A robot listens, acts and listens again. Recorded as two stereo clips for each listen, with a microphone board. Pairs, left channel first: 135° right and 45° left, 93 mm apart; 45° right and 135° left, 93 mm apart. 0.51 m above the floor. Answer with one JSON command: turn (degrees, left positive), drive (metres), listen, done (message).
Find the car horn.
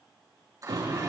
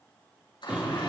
{"turn": 60}
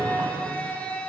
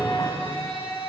{"done": "Facing the car horn, over 4 m away."}